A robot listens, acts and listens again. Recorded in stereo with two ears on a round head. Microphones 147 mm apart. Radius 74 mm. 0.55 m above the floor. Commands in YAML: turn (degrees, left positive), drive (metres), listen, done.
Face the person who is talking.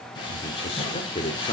turn: 35
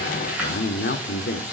turn: 105
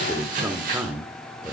turn: -10
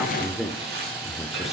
done: "Facing the man speaking, 1 to 2 m away."